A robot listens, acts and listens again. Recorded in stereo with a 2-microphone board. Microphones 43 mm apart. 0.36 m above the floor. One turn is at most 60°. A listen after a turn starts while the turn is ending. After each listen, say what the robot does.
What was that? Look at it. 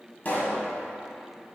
Turn 40° left.
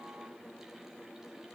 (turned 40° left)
Keep listening.
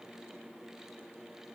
I heard a pop, but can't make it out now. It was about straight ahead or 100° left.